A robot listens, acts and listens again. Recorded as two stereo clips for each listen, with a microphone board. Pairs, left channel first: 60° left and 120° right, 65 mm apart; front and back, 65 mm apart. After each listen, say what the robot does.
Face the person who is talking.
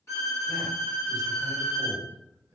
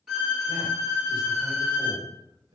Turn 160° right.
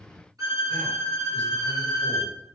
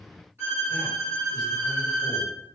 Keep listening.
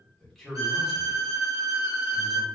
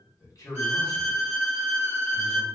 Turn 25° right.
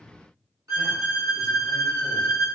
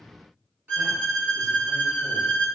Keep listening.
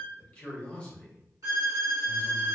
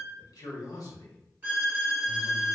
Turn 15° right.
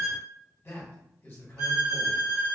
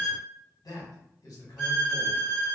Found it: a man speaking, straight ahead, 1 to 2 m away.